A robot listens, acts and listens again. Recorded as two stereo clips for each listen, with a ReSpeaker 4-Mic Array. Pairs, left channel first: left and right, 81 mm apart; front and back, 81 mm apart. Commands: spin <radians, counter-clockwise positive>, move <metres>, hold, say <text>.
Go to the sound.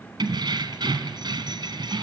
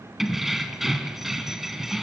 spin -1.66
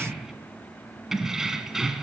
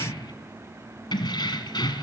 move 1.0
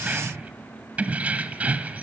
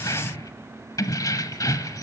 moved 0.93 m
spin -0.44
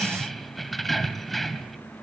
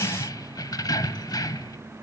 move 1.0
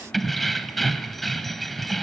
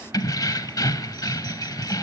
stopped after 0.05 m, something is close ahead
say I am next to the keys jangling.